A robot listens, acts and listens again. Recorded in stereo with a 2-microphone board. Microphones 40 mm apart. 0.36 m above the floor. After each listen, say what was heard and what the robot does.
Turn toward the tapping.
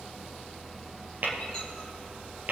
The tapping: about 50° right or 130° right. Turn 50° right.
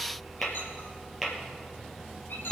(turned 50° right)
Facing the tapping.